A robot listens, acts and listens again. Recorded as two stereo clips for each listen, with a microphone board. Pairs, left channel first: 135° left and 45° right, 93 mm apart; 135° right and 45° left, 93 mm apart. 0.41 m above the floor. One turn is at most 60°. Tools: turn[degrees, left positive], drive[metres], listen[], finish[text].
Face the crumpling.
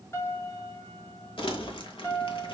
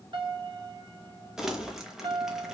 Thought: The crumpling: 130° left.
Action: turn[60]
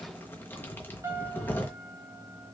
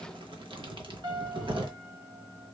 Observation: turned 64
Thought: The crumpling is now 70° left.
Action: turn[60]
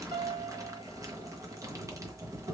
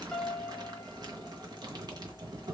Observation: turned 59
Thought: The crumpling is now 10° left.
Action: turn[10]
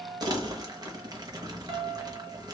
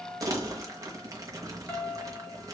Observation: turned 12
Action: finish[Found it: crumpling, straight ahead.]